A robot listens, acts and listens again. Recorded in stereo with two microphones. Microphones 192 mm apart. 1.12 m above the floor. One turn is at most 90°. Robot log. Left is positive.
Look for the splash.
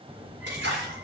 note: The splash: about 75° right or 105° right.
cmd yaw -75
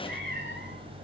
cmd idle
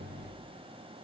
end: I heard a splash, but can't make it out now. It was about straight ahead or 30° right.